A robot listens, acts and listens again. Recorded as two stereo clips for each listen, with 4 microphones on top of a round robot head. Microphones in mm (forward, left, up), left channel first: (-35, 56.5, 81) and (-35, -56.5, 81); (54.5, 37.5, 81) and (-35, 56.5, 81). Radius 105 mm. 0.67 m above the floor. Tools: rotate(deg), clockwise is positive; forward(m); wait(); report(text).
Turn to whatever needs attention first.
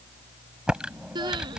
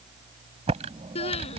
rotate(35)
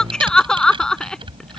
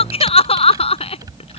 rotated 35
report("Found it: crying, straight ahead.")